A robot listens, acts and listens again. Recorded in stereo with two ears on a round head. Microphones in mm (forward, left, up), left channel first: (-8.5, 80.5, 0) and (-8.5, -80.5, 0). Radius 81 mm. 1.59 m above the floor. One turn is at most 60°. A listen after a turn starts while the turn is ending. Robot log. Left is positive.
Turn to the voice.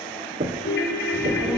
cmd yaw -30
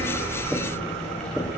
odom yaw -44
note: So it is at 35° left.
cmd yaw +35
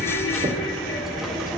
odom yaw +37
end: Found it: a child speaking, straight ahead, 2 to 4 m away.